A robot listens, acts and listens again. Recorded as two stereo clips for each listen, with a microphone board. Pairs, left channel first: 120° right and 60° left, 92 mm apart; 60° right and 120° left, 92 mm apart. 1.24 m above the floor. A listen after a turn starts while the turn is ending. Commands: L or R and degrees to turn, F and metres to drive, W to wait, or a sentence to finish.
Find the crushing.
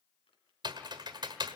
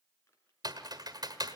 W
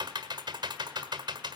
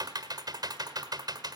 W
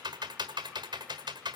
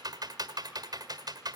I can't make out crushing to turn to.